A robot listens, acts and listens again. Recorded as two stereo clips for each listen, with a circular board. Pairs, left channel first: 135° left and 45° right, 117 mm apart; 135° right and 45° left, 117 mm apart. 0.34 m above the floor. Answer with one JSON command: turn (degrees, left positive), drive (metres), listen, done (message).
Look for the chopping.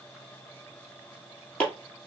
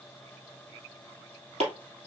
{"turn": 60}
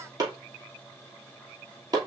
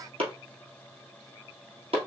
{"turn": 10}
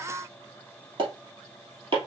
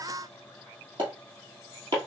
{"done": "Found it: chopping, straight ahead, 2 to 4 m away."}